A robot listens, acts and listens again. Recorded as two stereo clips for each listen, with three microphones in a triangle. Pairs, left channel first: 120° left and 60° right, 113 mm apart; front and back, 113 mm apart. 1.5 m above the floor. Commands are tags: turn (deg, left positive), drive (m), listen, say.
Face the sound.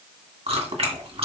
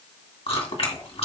<turn deg="-35"/>
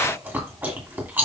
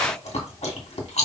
<turn deg="15"/>
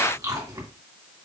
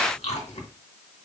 <say>Facing the chewing.</say>